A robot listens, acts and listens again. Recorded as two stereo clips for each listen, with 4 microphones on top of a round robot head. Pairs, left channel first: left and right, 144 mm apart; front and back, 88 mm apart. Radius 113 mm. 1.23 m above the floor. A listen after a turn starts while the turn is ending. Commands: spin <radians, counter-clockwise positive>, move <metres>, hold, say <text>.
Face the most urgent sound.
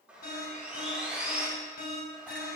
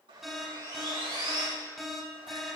spin 1.57
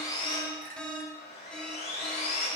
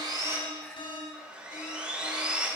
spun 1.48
spin 0.17
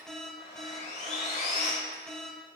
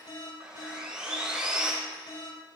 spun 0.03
say Facing the alarm.